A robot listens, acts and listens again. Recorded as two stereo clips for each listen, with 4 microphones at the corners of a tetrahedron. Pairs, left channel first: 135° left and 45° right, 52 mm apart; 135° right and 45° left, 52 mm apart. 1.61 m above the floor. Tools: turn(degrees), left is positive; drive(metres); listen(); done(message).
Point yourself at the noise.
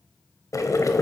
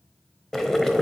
turn(degrees=145)
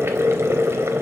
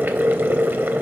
done("Facing the boiling, under 1 m away.")